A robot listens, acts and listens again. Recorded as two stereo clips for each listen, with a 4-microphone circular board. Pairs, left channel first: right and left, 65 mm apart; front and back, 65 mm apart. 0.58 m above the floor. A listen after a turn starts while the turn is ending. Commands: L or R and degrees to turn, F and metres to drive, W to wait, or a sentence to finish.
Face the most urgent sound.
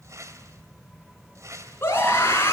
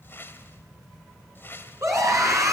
R145
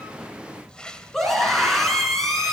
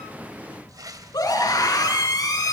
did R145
Found it: a scream, straight ahead, over 4 m away.